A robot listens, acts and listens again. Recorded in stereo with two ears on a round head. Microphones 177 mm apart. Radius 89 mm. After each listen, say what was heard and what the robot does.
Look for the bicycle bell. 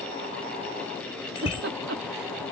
The bicycle bell: about 30° left or 150° left. Turn 30° left.
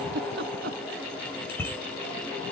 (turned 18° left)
So it is at 15° left. Turn 15° left.
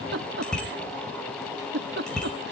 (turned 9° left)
Found it: a bicycle bell, straight ahead.